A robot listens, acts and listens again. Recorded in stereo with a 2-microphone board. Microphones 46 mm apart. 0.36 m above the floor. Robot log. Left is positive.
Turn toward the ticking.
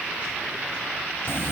cmd idle
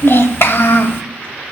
cmd idle
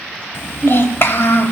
end: I can't make out ticking, only a child speaking.